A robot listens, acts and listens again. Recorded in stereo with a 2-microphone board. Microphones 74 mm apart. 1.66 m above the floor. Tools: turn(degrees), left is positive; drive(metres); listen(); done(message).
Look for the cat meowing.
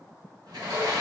listen()
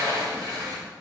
listen()
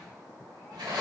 done("I can't make out a cat meowing, only a sliding door.")